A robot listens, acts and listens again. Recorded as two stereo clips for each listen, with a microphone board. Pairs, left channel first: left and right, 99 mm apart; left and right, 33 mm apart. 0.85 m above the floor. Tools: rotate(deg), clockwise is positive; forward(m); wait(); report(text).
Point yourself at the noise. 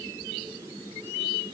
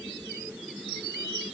wait()
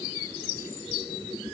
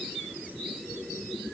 wait()
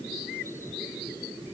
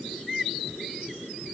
report("I can't make out anything to turn to.")